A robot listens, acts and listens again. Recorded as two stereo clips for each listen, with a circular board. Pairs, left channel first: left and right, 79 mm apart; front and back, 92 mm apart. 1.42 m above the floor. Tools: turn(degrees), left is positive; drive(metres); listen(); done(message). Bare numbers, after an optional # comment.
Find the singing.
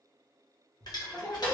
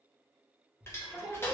# The singing: 95° left.
turn(95)
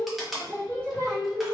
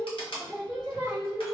# The singing is now 10° left.
turn(10)
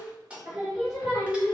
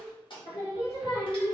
# The singing is now 15° right.
turn(-15)
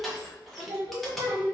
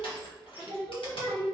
# The singing is now 10° right.
turn(-10)
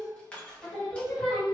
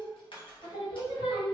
done("Facing the singing.")